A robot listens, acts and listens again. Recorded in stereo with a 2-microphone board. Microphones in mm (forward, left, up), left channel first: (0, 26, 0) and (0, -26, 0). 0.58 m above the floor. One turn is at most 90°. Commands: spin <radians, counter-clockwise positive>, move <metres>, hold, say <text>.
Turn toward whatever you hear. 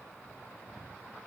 hold
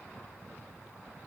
hold
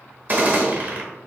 spin -0.61
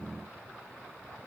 hold
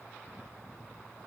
say I heard a gunshot, but can't make it out now. It was about straight ahead or 110° right.